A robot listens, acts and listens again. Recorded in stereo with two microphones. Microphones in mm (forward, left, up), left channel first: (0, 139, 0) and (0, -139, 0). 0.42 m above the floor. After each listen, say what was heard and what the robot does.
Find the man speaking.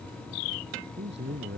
The man speaking: about 40° right or 140° right. Turn 40° right.
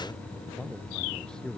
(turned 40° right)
Facing the man speaking.